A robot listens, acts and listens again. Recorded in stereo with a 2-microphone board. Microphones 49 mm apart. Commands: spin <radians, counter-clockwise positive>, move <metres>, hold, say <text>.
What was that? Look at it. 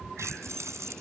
spin -1.57
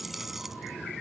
say Facing the keys jangling.